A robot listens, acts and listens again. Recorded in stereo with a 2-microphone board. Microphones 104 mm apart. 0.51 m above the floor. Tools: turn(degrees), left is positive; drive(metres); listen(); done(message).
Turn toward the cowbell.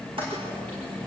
listen()
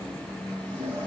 listen()
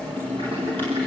done("I can't make out a cowbell to turn to.")